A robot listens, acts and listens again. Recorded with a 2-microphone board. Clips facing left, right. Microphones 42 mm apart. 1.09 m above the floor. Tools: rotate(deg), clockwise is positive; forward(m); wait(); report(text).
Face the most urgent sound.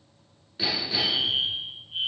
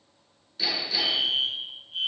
rotate(-25)
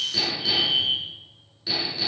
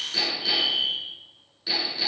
rotate(-125)
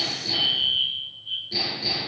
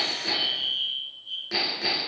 rotate(-40)
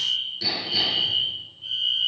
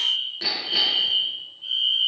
rotate(10)
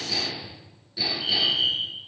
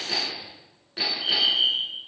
report("Facing the fire alarm, over 4 m away.")